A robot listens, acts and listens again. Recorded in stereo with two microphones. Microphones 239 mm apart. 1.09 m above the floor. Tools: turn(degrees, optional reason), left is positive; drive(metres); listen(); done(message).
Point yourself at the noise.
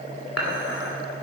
turn(degrees=90)
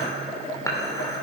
turn(degrees=15, reason="So it is at 15° left.")
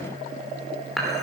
done("Found it: dishes clattering, straight ahead, 2 to 4 m away.")